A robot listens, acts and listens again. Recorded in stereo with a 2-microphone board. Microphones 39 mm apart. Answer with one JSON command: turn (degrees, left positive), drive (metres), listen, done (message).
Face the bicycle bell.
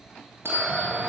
{"turn": -90}
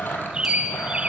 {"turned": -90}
{"listen": true}
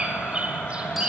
{"listen": true}
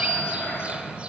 {"done": "Facing where the bicycle bell came from. I can't hear it now."}